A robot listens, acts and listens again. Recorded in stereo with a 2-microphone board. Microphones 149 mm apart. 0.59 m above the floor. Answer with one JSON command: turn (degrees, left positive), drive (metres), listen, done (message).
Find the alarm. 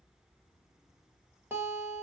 {"listen": true}
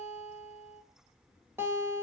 {"listen": true}
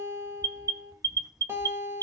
{"turn": -25}
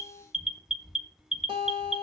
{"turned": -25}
{"done": "Facing the alarm."}